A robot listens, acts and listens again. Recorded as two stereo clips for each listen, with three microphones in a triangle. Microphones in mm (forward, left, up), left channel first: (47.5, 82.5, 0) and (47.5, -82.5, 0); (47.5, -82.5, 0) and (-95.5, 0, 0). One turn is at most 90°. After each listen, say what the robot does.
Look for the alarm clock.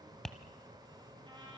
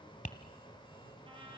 Keep listening.
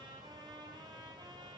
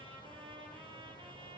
Keep listening.
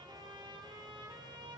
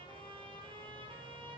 I can't make out an alarm clock, only tapping and a trumpet.